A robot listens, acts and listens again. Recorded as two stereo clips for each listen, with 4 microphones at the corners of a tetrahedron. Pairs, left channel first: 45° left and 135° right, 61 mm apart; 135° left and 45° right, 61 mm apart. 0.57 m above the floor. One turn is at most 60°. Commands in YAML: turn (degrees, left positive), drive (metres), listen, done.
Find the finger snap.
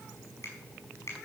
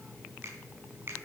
done: "Found it: a finger snap, straight ahead."